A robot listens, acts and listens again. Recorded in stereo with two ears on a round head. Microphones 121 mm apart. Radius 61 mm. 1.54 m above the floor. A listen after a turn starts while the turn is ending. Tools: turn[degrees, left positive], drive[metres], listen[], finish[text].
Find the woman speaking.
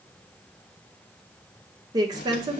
Thought: The woman speaking: about 30° right or 150° right.
Action: turn[-30]
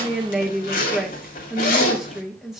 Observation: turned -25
Action: finish[Facing the woman speaking, 1 to 2 m away.]